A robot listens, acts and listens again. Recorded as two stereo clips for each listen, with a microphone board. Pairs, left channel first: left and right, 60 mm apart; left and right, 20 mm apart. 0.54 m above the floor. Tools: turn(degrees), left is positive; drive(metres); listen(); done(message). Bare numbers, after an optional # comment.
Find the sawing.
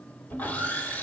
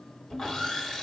# The sawing: about 25° left or 155° left.
turn(25)
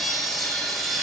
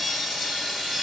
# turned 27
done("Facing the sawing.")